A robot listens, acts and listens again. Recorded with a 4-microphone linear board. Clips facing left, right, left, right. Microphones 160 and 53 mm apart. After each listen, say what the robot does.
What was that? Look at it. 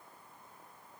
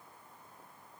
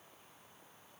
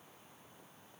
Keep listening.
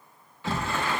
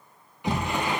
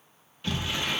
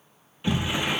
Turn 20° right.
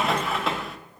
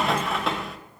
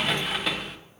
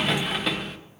Facing the sliding door.